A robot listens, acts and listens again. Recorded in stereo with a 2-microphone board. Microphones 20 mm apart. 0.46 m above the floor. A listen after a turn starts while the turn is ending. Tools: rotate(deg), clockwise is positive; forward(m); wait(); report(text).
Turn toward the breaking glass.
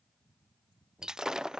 rotate(30)
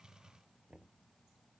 wait()
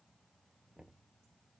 report("I heard breaking glass, but can't make it out now. It was about straight ahead or 120° right.")